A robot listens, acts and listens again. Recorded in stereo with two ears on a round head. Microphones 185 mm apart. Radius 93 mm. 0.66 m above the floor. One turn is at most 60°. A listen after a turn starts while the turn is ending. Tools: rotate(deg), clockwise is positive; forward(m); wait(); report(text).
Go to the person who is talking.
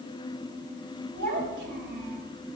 rotate(55)
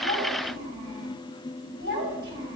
rotate(60)
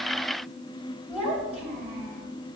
forward(1.0)
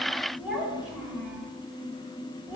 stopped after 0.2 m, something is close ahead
report("Blocked. The child speaking is further on, straight ahead.")